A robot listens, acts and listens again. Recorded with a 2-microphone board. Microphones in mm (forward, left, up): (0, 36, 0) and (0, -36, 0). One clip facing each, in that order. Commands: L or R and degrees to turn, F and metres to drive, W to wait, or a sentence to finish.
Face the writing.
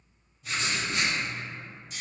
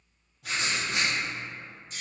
R70
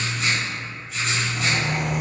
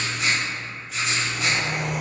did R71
Facing the writing.